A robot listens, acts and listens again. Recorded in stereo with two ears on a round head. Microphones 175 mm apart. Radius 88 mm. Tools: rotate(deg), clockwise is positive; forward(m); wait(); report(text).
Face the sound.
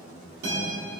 rotate(60)
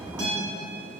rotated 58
rotate(60)
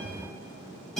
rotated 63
report("Facing the guitar.")